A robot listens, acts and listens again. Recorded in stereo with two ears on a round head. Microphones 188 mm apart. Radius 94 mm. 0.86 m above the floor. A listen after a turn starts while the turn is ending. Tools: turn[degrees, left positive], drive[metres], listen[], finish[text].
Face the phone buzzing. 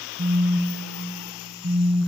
Thought: The phone buzzing: about 65° right or 115° right.
Action: turn[-65]
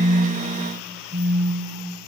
Thought: So it is at 50° right.
Action: turn[-50]
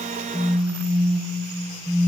Action: finish[Found it: a phone buzzing, straight ahead, over 4 m away.]